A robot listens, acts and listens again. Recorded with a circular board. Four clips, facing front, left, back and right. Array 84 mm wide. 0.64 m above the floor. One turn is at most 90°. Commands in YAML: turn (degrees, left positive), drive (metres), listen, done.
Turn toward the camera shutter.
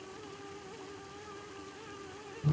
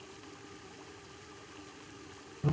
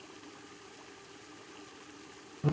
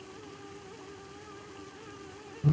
listen: true
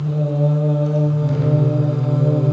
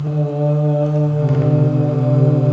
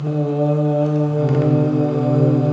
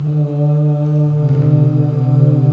listen: true
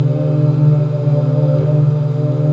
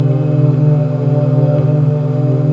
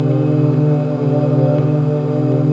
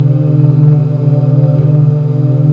done: "I can't make out a camera shutter, only singing."